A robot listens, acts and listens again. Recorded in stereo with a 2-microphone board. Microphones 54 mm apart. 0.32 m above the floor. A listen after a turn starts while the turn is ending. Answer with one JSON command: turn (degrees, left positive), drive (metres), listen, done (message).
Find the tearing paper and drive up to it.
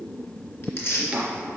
{"turn": 50}
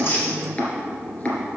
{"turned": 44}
{"listen": true}
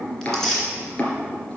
{"turn": 10}
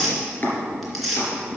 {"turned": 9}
{"drive": 1.0}
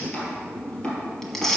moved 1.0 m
{"drive": 1.0}
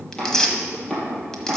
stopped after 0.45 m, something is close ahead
{"turn": 10}
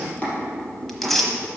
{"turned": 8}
{"done": "Arrived at the tearing paper, straight ahead."}